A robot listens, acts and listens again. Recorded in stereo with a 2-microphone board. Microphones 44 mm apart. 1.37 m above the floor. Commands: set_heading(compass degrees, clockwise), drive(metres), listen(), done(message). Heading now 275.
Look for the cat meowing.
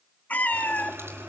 set_heading(235)
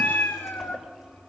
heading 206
set_heading(141)
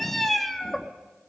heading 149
done("Facing the cat meowing, 1 to 2 m away.")